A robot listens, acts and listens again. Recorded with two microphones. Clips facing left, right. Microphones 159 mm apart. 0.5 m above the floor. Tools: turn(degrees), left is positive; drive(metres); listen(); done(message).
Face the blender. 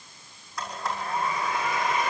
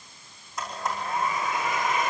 turn(degrees=-20)
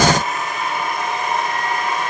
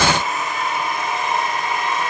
done("Facing the blender, over 4 m away.")